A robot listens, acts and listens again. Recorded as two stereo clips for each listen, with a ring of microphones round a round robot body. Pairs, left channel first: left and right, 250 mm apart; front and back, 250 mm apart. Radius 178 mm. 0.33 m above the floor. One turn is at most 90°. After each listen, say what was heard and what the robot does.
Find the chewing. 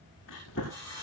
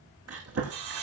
The chewing: 150° left. Turn 90° left.
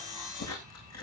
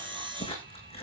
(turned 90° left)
The chewing is now 70° left. Turn 70° left.
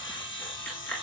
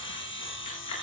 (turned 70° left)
Found it: chewing, straight ahead, over 4 m away.